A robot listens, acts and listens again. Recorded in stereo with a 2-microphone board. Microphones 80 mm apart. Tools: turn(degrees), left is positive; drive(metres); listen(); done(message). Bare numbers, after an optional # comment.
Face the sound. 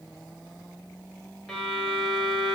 turn(30)
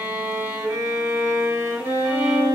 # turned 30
# So it is at 25° right.
turn(-25)
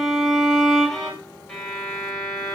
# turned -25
done("Found it: a violin, straight ahead, 1 to 2 m away.")